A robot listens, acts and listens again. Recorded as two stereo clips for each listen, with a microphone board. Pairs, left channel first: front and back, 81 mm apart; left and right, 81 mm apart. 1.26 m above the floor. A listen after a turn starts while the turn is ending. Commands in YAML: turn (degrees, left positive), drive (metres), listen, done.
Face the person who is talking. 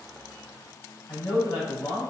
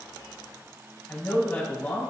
turn: 25
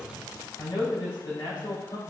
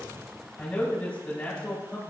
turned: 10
turn: 15
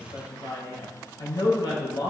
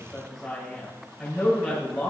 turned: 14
done: "Facing the man speaking, 2 to 4 m away."